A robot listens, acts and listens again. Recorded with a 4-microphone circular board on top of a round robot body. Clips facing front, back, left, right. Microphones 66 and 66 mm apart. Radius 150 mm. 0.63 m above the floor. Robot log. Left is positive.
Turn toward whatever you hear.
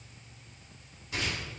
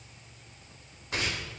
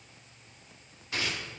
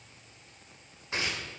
note: The tearing paper: 150° right.
cmd yaw -150
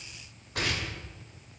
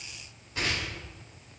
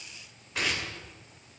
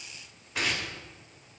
end: Found it: tearing paper, straight ahead, 2 to 4 m away.